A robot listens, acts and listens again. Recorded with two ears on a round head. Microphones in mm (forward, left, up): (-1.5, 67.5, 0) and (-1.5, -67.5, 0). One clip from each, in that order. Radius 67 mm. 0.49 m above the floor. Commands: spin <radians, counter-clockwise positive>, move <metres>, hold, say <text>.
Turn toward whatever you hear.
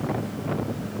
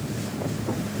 hold
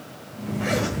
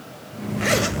spin -0.96
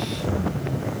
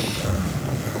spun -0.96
spin -1.13
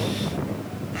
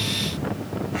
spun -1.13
say Found it: a zipper, straight ahead, 1 to 2 m away.